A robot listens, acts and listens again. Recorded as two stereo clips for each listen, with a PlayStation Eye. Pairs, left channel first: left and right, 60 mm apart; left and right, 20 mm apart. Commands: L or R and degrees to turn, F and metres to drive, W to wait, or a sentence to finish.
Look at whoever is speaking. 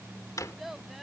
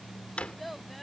R30
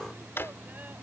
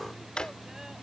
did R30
W
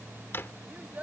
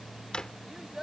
R155
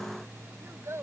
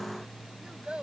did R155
R45
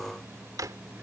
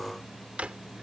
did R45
W
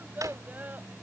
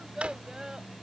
R30
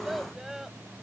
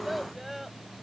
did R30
Found it: a child speaking, straight ahead.